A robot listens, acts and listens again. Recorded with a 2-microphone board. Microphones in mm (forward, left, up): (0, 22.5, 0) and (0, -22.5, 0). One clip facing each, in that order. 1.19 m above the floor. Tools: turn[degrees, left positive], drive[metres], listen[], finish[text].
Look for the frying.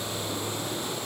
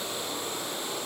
Action: listen[]
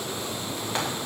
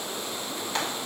Thought: The frying: about 20° left or 160° left.
Action: turn[20]
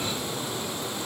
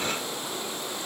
Action: listen[]
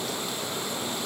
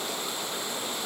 Action: listen[]
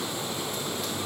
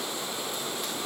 Action: finish[I heard frying, but can't make it out now. It was about straight ahead or 140° left.]